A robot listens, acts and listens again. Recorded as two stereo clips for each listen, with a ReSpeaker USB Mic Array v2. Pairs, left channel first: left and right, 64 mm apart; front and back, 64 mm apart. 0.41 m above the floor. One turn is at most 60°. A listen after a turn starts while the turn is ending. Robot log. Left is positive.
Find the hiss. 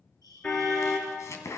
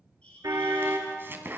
note: The hiss: 70° left.
cmd yaw +60
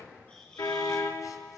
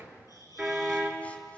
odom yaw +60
note: The hiss is now 10° left.
cmd yaw +10
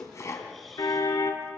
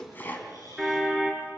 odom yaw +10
cmd idle
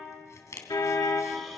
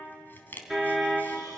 cmd idle
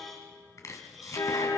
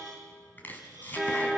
end: I heard a hiss from this way, but can't make it out now.